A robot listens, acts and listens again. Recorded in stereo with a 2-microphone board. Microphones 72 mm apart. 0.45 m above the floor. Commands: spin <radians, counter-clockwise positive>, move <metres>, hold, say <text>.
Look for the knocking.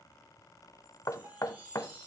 spin 0.87
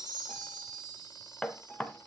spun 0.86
spin 0.26
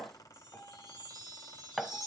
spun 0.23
say Found it: knocking, straight ahead.